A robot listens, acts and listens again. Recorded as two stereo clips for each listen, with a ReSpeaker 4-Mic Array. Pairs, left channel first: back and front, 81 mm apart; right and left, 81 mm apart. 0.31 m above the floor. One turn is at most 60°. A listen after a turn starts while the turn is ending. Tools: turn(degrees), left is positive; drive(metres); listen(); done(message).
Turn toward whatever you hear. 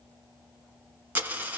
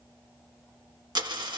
turn(degrees=60)
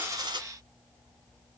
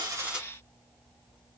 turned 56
turn(degrees=10)
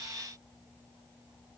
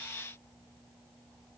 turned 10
done("I heard a dropped coin from this way, but can't make it out now.")